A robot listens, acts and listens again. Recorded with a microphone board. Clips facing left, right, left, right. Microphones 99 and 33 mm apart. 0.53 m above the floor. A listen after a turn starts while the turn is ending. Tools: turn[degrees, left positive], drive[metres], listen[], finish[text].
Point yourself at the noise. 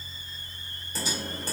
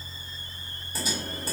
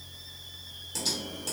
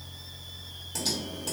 Action: turn[-30]
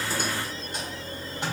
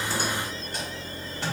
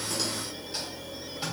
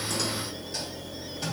Thought: So it is at 25° left.
Action: turn[25]
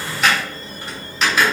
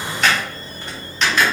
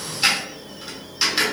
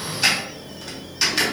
Action: finish[Facing the typing on a keyboard.]